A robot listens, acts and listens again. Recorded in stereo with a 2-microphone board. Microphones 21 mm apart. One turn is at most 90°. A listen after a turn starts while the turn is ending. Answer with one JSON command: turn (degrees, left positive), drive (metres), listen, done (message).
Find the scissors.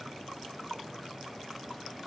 {"listen": true}
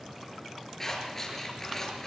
{"turn": 20}
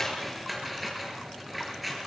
{"done": "Facing the scissors."}